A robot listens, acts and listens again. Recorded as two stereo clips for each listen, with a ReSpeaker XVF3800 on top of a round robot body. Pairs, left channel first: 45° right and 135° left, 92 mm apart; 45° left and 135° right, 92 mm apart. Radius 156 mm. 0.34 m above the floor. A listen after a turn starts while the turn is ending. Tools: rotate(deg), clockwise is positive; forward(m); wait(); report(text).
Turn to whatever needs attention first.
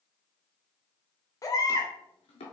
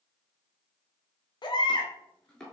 report("Found it: a baby crying, straight ahead, 1 to 2 m away.")